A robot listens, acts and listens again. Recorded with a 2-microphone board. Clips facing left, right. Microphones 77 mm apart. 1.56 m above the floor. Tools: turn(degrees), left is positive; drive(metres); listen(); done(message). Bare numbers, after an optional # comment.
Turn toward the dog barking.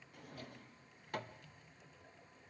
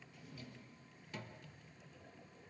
listen()
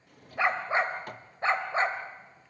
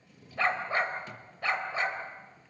# The dog barking: about 35° left or 145° left.
turn(35)
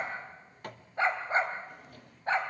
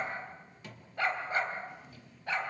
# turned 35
# The dog barking: about 35° left or 145° left.
turn(35)
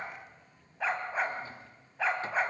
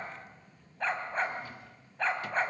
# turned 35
done("Facing the dog barking.")